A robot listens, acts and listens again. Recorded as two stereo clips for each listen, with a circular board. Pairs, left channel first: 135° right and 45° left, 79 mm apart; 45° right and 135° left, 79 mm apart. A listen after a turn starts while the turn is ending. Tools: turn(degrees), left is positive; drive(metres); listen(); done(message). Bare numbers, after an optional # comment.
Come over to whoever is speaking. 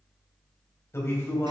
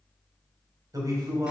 # The man speaking: 170° left.
turn(170)
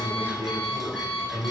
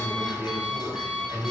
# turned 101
# The man speaking is now 70° left.
turn(70)
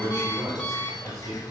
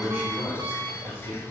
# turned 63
# The man speaking is now 10° left.
turn(10)
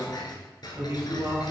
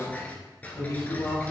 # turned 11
drive(1.0)
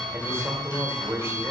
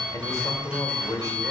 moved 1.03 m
# The man speaking is now 10° right.
turn(-10)
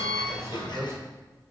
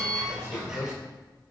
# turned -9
drive(1.0)
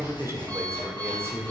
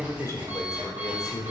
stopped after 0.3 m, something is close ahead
done("I am next to the man speaking.")